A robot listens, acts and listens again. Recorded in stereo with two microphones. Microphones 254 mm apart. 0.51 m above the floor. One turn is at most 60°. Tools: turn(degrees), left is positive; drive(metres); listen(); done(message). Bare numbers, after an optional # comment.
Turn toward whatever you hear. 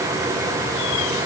listen()
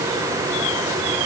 listen()
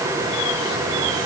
done("I can't make out anything.")